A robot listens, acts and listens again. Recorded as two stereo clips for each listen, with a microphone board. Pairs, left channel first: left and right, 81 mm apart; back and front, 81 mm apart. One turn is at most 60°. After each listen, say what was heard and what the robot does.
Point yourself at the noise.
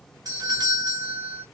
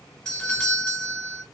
The doorbell: 105° right. Turn 60° right.
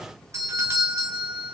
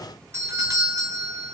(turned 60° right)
The doorbell is now 45° right. Turn 45° right.
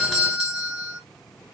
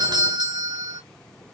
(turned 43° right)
Found it: a doorbell, straight ahead.